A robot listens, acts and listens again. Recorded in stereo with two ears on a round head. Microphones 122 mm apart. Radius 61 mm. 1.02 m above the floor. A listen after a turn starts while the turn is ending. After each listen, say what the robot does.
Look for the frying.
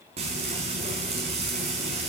Turn 45° right.
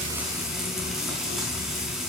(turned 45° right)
Found it: frying, straight ahead, over 4 m away.